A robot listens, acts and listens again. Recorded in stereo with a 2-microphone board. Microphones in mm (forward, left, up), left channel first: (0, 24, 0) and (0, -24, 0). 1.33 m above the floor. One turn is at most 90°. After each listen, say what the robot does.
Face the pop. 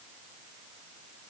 Keep listening.
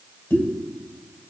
Turn 70° left.
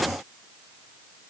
Keep listening.
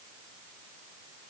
I heard a pop, but can't make it out now. It was about straight ahead or 40° left.